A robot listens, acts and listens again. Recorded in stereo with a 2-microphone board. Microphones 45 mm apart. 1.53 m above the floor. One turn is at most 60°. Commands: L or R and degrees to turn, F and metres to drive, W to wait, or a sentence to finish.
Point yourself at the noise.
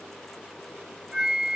R30
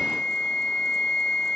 L15
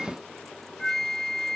L10
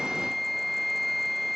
Facing the flute.